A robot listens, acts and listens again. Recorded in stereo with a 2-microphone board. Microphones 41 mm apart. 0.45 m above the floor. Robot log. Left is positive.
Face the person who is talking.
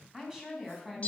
note: The woman speaking: about 15° right or 165° right.
cmd yaw -15
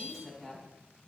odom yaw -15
cmd yaw -30
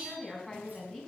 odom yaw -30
note: So it is at 15° left.
cmd yaw +15
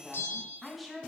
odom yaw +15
end: Found it: a woman speaking, straight ahead.